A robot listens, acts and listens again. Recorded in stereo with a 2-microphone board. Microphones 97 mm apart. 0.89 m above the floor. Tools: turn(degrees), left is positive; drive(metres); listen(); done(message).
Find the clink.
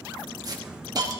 listen()
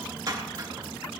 listen()
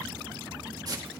done("I can't make out a clink to turn to.")